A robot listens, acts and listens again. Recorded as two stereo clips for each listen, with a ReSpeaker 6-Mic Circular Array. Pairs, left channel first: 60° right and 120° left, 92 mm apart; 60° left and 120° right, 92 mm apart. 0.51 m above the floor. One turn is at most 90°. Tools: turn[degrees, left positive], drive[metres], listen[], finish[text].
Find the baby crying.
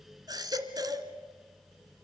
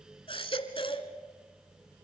Thought: The baby crying: 75° left.
Action: turn[75]
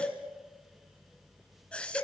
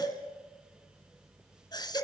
Thought: The baby crying is now 20° left.
Action: turn[20]
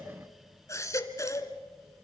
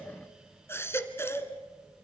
Action: finish[Facing the baby crying.]